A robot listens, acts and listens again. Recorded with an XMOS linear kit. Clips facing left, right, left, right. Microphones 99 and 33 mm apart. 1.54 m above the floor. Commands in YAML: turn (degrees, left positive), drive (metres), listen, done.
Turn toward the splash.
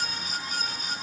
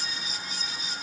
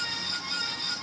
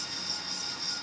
listen: true
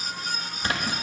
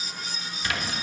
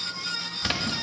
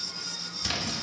turn: 40
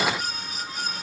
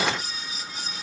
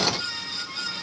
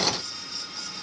listen: true
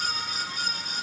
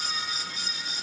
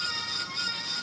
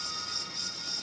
done: "I heard a splash, but can't make it out now. It was about straight ahead or 100° left."